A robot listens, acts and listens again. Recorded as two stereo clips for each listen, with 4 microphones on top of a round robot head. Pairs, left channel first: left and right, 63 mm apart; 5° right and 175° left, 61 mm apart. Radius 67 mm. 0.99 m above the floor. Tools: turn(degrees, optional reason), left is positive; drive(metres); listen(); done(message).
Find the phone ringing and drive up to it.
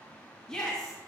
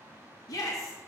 listen()
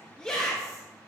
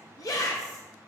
listen()
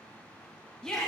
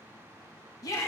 done("I can't make out a phone ringing, only a shout.")